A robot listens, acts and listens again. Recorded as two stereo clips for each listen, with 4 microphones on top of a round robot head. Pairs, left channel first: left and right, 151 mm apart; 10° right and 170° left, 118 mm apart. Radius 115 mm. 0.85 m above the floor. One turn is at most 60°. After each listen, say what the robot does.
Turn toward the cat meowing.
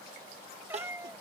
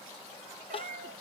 Turn 60° right.
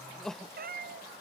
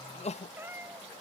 Turn 60° right.
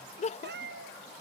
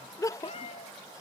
Turn 60° right.
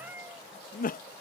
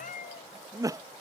Turn 10° right.
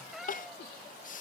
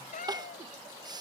Found it: a cat meowing, straight ahead.